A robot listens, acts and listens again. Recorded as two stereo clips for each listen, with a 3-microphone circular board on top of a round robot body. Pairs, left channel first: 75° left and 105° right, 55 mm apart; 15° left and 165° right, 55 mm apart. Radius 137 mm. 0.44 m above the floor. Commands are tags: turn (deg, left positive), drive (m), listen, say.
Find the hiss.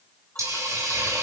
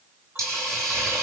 <turn deg="-130"/>
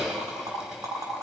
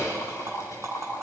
<turn deg="-30"/>
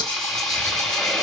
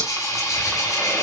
<turn deg="-10"/>
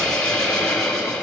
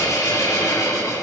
<say>Facing the hiss, over 4 m away.</say>